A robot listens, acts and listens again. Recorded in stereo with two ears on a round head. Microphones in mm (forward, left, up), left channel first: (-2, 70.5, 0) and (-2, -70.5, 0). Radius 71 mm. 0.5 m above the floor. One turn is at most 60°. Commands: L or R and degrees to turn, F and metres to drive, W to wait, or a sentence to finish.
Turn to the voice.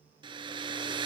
W
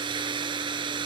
W
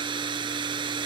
I can't make out anyone speaking to turn to.